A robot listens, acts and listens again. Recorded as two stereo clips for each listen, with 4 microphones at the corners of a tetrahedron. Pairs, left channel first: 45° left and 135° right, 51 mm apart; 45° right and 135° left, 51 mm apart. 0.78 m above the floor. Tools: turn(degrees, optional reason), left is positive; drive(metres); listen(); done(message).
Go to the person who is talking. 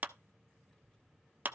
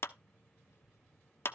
turn(degrees=-30, reason="The child speaking: 30° right.")
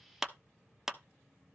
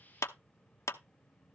drive(metres=1.0)
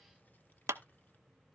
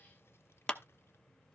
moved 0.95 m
turn(degrees=-10, reason="The child speaking is now 10° right.")
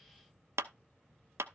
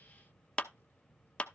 drive(metres=1.0)
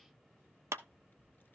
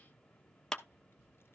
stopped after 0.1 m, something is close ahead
done("I am next to the child speaking.")